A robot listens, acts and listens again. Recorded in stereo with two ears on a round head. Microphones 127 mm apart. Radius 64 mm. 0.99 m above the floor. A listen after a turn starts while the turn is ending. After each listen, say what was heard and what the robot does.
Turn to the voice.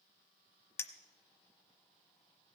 Keep listening.
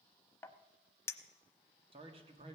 The man speaking: about 35° right or 145° right. Turn 35° right.
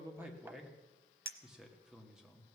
Found it: a man speaking, straight ahead.